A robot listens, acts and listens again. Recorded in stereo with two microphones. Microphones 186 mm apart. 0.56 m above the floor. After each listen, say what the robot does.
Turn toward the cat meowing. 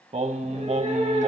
Turn 40° right.
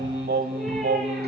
Keep listening.
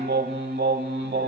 Keep listening.
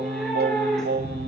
Found it: a cat meowing, straight ahead.